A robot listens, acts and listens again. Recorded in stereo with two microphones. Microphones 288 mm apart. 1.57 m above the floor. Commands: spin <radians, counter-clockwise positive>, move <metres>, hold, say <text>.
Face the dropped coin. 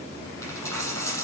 spin 0.52
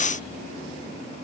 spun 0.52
hold
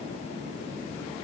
say I heard a dropped coin, but can't make it out now. It was about 20° right or 140° left.